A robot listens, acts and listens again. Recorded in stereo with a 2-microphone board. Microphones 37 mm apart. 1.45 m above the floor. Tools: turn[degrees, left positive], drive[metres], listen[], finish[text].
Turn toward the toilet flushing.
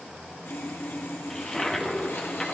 Action: turn[30]
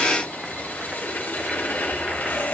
Action: listen[]
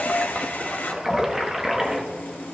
Thought: So it is at 15° right.
Action: turn[-15]
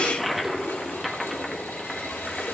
Action: finish[Found it: a toilet flushing, straight ahead.]